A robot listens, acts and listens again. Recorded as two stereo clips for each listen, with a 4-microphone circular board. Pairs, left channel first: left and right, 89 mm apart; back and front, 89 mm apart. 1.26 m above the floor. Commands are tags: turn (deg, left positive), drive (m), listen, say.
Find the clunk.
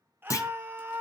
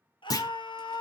<turn deg="140"/>
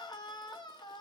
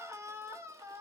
<say>Facing where the clunk came from. I can't hear it now.</say>